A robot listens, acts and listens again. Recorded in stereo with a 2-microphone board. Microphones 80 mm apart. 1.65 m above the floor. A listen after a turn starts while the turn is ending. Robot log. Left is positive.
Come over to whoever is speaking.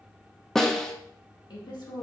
note: The woman speaking: about 70° left or 110° left.
cmd yaw +70
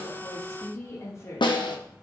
note: So it is at 40° left.
cmd yaw +40
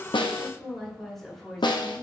cmd fwd 1.0
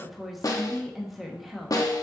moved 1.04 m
cmd fwd 1.0
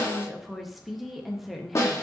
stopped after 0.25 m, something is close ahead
end: I am next to the woman speaking.